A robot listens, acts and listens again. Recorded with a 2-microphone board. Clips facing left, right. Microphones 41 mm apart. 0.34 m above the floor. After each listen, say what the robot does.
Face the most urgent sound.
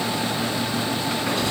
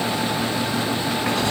Keep listening.
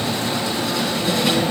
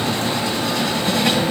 Keep listening.
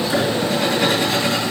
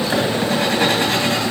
I can't make out anything urgent, only writing.